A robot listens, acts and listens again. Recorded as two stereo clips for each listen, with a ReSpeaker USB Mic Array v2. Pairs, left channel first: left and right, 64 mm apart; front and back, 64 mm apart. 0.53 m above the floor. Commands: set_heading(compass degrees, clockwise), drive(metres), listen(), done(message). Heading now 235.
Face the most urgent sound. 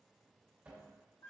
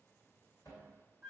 listen()
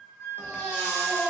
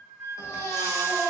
set_heading(200)
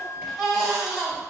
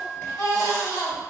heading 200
done("Found it: a baby crying, straight ahead.")